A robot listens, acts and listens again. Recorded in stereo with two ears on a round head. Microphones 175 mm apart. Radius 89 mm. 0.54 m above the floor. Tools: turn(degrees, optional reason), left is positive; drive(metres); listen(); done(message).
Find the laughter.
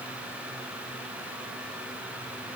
listen()
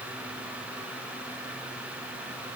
listen()
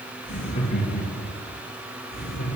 turn(degrees=45, reason="The laughter: about 45° left or 135° left.")
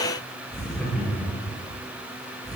done("Found it: laughter, straight ahead, over 4 m away.")